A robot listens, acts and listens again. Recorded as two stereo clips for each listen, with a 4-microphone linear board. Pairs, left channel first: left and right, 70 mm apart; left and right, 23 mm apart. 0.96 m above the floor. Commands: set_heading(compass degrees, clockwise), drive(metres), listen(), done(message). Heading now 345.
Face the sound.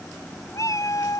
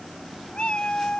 set_heading(290)
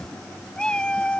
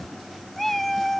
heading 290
set_heading(275)
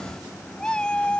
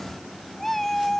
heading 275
set_heading(260)
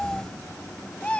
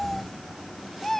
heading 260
set_heading(245)
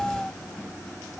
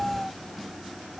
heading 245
set_heading(235)
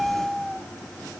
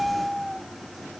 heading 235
done("Facing the cat meowing.")